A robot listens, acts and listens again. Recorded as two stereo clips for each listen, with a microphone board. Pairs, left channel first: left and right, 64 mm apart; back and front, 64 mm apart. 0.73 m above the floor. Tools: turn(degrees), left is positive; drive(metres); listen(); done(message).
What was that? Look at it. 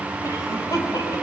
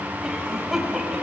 turn(degrees=80)
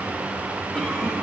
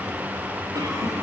turn(degrees=15)
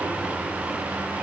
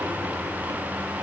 listen()
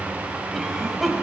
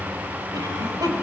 done("Found it: a cough, straight ahead.")